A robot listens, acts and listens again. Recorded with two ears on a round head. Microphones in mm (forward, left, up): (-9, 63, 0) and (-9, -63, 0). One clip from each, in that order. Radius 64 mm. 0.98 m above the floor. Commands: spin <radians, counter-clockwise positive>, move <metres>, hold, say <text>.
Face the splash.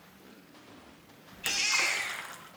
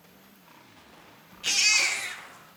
spin 0.96
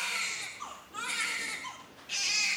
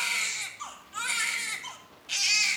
hold
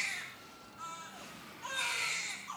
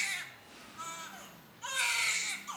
say I heard a splash, but can't make it out now. It was about straight ahead or 70° left.